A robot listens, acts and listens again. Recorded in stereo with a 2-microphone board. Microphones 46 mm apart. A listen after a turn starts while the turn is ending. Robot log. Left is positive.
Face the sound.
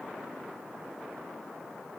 cmd idle
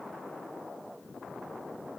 cmd idle
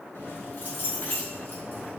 note: The keys jangling: about 50° left or 130° left.
cmd yaw +50
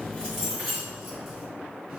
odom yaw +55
end: Found it: keys jangling, straight ahead, 2 to 4 m away.